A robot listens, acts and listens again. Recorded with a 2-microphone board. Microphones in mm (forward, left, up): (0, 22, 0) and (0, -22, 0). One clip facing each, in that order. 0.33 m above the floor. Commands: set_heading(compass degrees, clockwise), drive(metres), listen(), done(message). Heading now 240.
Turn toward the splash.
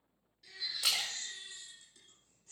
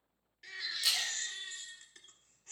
set_heading(150)
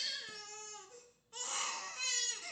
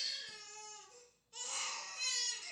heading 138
set_heading(148)
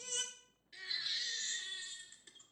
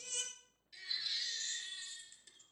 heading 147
done("I heard a splash from this way, but can't make it out now.")